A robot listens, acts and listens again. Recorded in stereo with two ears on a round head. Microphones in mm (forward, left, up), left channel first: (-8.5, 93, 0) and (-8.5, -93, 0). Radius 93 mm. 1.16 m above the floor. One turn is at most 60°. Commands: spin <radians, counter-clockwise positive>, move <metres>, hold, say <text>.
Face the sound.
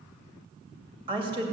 spin -0.44
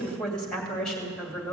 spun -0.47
say Found it: a woman speaking, straight ahead, 2 to 4 m away.